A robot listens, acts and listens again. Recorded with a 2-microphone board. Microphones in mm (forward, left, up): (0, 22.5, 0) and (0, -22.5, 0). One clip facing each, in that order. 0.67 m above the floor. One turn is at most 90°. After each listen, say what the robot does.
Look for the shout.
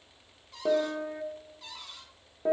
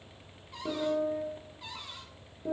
Keep listening.
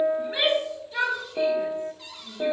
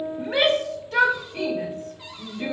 Turn 65° right.
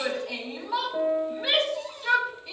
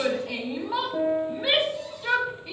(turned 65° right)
Turn 10° right.
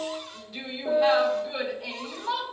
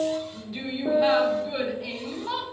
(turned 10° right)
Found it: a shout, straight ahead, 2 to 4 m away.